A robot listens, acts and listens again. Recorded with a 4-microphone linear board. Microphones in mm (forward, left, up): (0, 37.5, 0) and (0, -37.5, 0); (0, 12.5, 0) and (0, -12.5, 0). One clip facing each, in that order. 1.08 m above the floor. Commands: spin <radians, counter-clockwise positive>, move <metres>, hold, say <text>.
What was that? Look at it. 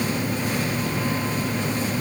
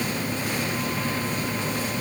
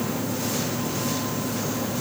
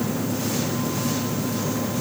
hold
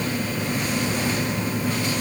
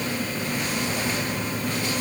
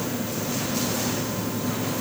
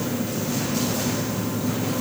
hold
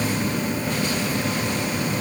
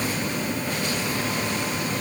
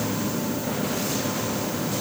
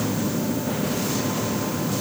say I can't make out anything.